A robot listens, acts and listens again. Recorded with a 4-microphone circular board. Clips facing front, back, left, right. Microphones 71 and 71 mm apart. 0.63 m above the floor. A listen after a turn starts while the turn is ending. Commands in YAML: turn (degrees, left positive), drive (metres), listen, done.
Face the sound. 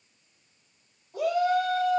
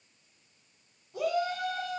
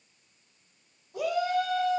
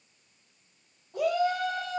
turn: -55
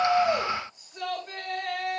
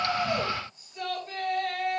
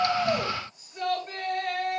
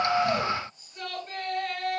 turn: 10
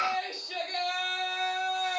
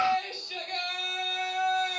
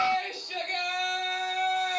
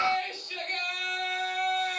done: "Facing the shout."